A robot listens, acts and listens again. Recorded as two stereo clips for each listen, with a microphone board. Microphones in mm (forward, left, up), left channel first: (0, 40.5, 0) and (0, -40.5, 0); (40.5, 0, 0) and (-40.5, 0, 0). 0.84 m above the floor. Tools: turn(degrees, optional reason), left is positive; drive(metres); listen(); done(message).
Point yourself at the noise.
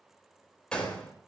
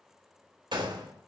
turn(degrees=170, reason="The gunshot: 170° left.")
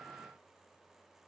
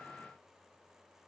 done("Facing where the gunshot came from. I can't hear it now.")